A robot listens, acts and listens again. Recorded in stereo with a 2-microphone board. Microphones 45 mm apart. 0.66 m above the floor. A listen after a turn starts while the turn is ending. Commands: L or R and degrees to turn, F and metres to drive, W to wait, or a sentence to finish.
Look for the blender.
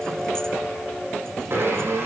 R65
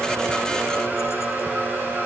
R50
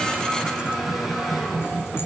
Found it: a blender, straight ahead, over 4 m away.